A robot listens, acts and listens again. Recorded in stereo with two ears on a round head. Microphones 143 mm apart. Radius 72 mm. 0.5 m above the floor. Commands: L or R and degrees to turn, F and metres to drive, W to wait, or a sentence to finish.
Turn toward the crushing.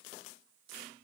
W
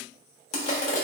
L40
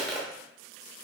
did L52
Found it: crushing, straight ahead.